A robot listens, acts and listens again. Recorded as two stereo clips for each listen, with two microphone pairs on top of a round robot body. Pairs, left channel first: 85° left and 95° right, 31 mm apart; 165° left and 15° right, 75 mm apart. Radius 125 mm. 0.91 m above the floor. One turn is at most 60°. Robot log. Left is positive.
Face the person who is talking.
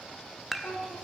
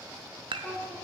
note: The child speaking: 90° left.
cmd yaw +60
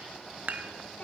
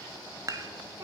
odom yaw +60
note: The child speaking is now 40° left.
cmd yaw +40
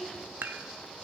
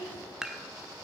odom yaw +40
end: Found it: a child speaking, straight ahead.